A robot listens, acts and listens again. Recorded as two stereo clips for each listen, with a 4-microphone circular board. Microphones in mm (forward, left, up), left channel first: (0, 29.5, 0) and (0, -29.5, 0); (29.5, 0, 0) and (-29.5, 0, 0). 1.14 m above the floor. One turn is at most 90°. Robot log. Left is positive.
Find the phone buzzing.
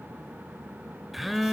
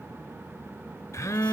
end: Found it: a phone buzzing, straight ahead.